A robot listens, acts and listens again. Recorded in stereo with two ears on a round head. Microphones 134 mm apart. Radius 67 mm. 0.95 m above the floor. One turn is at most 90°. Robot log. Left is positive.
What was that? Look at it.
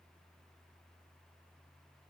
cmd idle
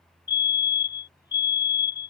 note: The fire alarm: about 30° left or 150° left.
cmd yaw +30
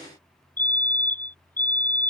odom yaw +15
note: So it is at 15° left.
cmd yaw +15
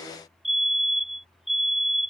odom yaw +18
end: Facing the fire alarm.